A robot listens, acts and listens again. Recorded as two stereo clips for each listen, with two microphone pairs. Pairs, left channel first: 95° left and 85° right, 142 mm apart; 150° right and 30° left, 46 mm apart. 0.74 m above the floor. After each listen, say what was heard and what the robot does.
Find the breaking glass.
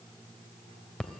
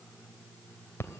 Keep listening.
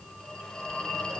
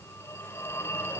Keep listening.
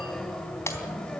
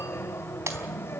The breaking glass: 25° left. Turn 25° left.
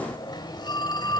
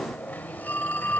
I heard breaking glass from this way, but can't make it out now.